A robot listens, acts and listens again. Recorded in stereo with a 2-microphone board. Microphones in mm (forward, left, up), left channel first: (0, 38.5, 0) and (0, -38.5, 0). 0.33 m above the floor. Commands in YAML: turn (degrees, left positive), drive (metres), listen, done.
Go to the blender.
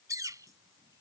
listen: true
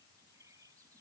listen: true
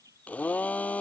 turn: 20
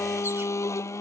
turn: 140
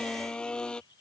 turn: 10
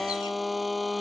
drive: 1.0
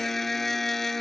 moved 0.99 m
drive: 1.0
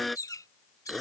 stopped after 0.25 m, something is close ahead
done: "Arrived at the blender, straight ahead."